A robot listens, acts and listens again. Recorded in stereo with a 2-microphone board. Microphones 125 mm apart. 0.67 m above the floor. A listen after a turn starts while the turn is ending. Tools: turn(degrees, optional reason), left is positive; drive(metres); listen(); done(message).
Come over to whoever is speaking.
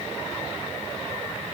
listen()
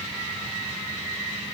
listen()
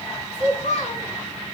turn(degrees=90)
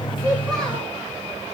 listen()
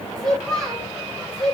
drive(metres=1.0)
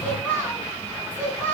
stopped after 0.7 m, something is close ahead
turn(degrees=15, reason="The child speaking is now 15° left.")
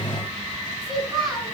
done("Something is in my way. I am facing the child speaking but have not reached it.")